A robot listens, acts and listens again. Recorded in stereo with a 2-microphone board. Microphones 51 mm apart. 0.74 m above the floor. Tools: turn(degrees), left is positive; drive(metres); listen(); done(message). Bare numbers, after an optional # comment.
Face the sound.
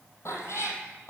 # The cat meowing: about 70° left or 110° left.
turn(70)
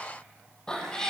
# So it is at 15° left.
turn(15)
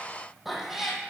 done("Found it: a cat meowing, straight ahead, 2 to 4 m away.")